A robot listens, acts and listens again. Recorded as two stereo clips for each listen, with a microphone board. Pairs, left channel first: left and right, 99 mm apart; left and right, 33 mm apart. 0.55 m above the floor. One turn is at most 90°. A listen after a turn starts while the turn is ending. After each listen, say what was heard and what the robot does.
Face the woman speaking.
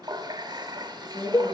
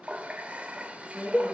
Turn 90° right.
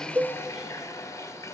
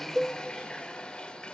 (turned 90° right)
Keep listening.
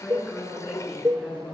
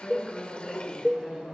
Facing the woman speaking, over 4 m away.